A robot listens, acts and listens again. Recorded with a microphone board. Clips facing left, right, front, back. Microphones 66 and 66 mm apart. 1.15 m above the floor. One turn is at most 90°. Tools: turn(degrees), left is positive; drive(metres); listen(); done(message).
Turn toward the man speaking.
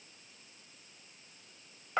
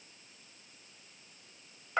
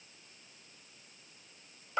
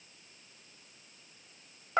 listen()
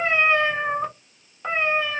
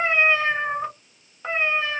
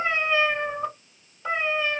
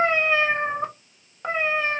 listen()
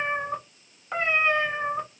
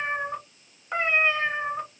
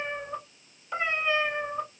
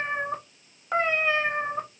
done("I can't make out a man speaking to turn to.")